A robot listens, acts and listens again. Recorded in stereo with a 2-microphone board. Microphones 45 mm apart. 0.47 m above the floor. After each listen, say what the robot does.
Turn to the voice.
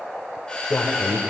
Turn 55° left.
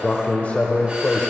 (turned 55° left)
Turn 35° left.
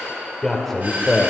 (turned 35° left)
Found it: a man speaking, straight ahead.